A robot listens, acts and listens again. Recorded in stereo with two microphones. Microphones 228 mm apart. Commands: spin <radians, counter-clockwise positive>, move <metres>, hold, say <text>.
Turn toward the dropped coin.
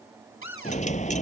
spin 0.52
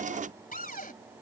hold
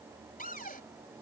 say I heard a dropped coin, but can't make it out now. It was about straight ahead or 120° left.